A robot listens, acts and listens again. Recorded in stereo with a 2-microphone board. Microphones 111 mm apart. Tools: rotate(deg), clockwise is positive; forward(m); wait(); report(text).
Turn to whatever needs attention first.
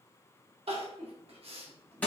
rotate(65)
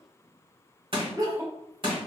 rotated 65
rotate(35)
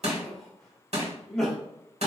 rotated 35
report("Found it: crying, straight ahead.")